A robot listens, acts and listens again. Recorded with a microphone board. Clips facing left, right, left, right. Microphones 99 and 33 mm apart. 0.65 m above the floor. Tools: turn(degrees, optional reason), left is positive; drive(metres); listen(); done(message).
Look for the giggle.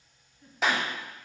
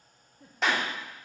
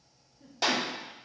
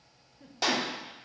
turn(degrees=-90)
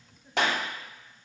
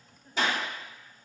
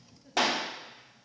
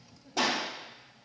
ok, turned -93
done("Found it: a giggle, straight ahead, under 1 m away.")